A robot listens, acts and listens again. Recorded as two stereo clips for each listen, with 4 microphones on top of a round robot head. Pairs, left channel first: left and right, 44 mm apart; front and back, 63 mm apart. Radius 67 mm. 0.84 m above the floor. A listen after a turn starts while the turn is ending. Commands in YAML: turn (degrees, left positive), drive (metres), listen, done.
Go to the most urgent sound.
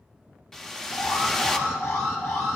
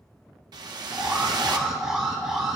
turn: 95
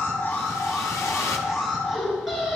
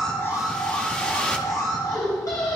drive: 1.0
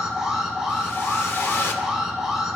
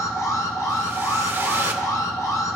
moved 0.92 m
turn: -10
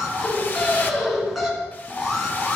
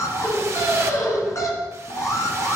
drive: 1.0
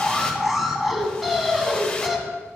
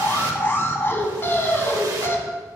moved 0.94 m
drive: 1.0
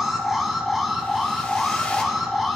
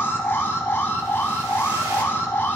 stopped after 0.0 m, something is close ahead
done: "I am next to the alarm."